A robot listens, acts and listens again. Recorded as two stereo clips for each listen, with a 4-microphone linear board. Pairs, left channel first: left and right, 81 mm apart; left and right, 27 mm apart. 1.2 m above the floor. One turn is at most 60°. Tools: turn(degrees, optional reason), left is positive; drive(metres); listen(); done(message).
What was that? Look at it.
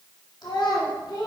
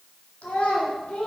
turn(degrees=55, reason="The child speaking: about 55° left or 125° left.")
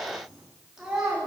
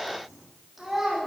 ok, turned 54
turn(degrees=-10, reason="So it is at 10° right.")
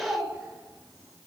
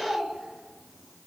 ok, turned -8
done("Facing the child speaking, 1 to 2 m away.")